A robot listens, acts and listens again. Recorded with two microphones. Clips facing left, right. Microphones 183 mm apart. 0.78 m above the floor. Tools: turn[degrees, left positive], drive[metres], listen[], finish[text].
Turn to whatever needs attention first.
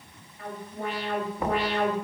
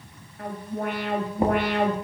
Thought: The alarm: about 55° right or 125° right.
Action: turn[-55]
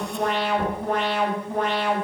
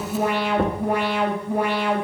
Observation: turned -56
Thought: So it is at 10° right.
Action: turn[-10]
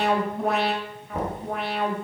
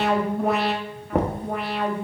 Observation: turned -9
Action: finish[Found it: an alarm, straight ahead, 1 to 2 m away.]